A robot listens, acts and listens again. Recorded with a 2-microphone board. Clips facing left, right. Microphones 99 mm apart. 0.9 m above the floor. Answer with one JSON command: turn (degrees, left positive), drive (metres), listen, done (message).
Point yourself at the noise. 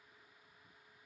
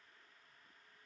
{"listen": true}
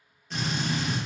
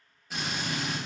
{"turn": -30}
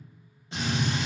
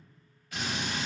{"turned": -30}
{"turn": 25}
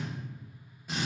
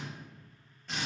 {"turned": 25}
{"turn": 10}
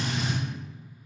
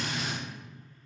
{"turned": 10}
{"done": "Found it: a drill, straight ahead."}